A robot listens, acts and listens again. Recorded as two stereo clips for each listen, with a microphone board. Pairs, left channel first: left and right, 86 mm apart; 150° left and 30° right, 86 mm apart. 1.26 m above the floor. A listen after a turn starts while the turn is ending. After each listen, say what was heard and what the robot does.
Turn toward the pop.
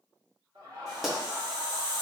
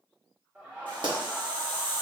Facing the pop.